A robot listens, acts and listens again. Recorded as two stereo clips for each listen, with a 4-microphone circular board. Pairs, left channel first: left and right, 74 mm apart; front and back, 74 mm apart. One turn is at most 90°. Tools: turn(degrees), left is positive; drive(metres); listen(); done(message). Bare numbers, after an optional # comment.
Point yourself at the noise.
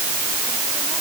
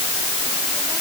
listen()
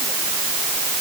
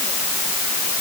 listen()
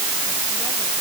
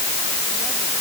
done("I can't make out anything.")